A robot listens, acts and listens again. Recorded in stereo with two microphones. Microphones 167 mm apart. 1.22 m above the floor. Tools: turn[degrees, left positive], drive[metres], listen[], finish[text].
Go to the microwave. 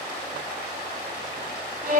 Action: listen[]
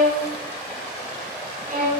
Action: listen[]
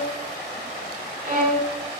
Action: finish[I can't make out a microwave to turn to.]